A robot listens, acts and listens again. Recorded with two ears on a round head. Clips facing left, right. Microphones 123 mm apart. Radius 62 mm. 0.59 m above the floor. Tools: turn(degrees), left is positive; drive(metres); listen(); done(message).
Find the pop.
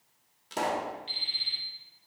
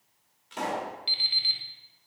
turn(degrees=45)
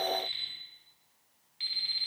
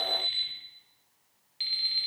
listen()
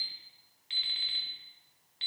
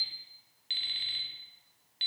done("I heard a pop, but can't make it out now. It was about straight ahead or 90° left.")